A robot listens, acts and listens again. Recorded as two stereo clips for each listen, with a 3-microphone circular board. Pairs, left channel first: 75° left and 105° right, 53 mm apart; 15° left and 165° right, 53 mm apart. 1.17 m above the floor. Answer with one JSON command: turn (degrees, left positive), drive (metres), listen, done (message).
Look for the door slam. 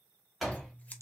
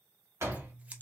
{"turn": 165}
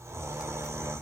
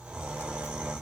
{"done": "Facing where the door slam came from. I can't hear it now."}